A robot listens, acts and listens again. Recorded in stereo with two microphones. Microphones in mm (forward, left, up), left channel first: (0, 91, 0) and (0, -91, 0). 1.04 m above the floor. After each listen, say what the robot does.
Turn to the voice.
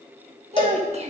Turn 35° right.
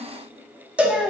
Found it: a child speaking, straight ahead.